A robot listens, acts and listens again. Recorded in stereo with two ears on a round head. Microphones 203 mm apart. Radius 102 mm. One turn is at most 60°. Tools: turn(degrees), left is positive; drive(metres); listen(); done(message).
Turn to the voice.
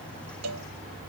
listen()
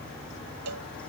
listen()
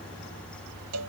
done("I can't make out anyone speaking to turn to.")